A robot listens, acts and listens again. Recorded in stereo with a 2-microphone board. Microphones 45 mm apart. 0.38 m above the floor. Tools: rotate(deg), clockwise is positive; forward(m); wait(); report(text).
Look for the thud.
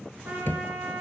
rotate(-50)
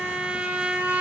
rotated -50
wait()
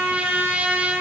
report("I heard a thud, but can't make it out now. It was about straight ahead or 80° left.")